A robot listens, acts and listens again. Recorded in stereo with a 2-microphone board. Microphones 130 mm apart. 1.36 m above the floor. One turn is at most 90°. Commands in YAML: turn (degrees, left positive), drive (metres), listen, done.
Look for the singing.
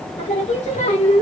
turn: 55
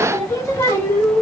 turn: 15
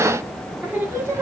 turn: -20
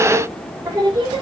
turn: -35
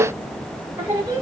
turn: -20
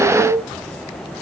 done: "Facing the singing, 1 to 2 m away."